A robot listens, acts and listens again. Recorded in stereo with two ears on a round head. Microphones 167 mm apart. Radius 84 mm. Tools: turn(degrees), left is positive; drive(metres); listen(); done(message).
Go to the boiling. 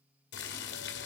turn(degrees=65)
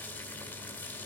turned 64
turn(degrees=10)
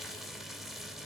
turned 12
drive(metres=1.0)
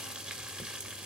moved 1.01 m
drive(metres=1.0)
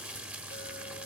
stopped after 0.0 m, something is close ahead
turn(degrees=-10)
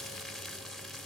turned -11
done("Arrived at the boiling, straight ahead.")